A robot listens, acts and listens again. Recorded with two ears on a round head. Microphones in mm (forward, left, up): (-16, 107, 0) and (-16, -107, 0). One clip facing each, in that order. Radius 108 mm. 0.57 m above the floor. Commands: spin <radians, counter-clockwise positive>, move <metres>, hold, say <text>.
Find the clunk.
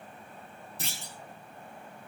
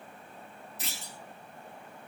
spin 0.52
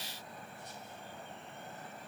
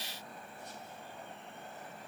hold
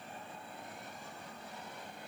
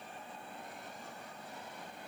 say I heard a clunk, but can't make it out now. It was about straight ahead or 120° left.